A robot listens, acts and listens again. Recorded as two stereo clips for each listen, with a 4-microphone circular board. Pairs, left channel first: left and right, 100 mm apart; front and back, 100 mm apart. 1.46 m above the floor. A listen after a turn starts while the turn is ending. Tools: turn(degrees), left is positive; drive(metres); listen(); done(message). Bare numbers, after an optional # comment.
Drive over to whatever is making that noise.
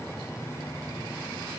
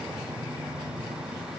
listen()
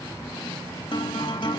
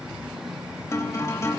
# The guitar: 60° left.
turn(60)
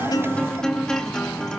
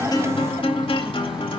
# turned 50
# The guitar is now 10° left.
turn(10)
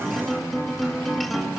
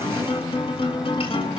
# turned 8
drive(1.0)
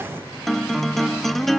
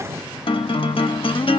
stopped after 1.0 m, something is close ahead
done("Arrived at the guitar, straight ahead.")